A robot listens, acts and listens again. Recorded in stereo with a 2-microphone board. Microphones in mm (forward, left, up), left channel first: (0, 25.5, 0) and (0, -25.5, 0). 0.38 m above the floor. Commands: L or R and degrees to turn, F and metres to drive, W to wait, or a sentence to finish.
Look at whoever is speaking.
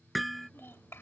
L50
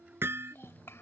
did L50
L70
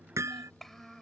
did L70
Found it: a child speaking, straight ahead.